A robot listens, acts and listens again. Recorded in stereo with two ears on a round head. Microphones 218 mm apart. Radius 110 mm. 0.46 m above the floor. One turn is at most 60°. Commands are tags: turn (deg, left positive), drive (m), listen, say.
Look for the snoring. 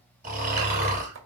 <turn deg="-35"/>
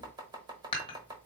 <listen/>
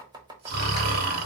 <turn deg="-60"/>
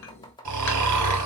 <turn deg="-60"/>
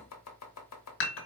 <turn deg="-15"/>
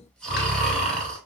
<say>Found it: snoring, straight ahead.</say>